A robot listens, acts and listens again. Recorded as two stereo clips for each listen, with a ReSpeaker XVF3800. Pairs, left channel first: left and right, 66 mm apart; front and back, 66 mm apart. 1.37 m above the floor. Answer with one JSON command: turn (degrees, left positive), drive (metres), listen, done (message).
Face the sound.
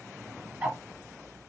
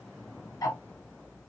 {"turn": -25}
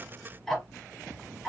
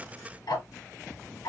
{"done": "Facing the ticking."}